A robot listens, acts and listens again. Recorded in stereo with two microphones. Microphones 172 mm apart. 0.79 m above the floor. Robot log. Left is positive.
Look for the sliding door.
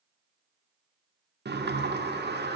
cmd yaw -90
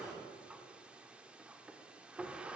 end: Facing the sliding door.